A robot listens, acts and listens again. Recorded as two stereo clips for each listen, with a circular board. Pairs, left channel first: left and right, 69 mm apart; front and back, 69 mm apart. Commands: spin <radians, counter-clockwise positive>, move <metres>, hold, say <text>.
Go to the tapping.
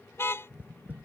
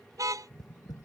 spin -0.35
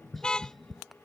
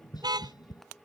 move 1.0
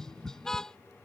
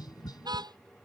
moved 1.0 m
spin 0.17
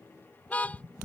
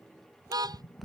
move 1.0
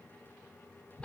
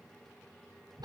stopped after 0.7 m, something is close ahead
hold
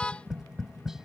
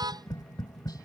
say Arrived at the tapping, straight ahead.